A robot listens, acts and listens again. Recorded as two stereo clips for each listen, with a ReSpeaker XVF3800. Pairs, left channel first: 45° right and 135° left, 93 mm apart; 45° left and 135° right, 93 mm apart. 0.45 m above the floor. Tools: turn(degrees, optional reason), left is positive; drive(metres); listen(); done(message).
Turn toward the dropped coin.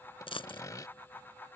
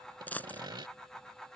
turn(degrees=-30, reason="The dropped coin: 30° right.")
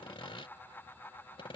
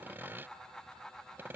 done("I heard a dropped coin from this way, but can't make it out now.")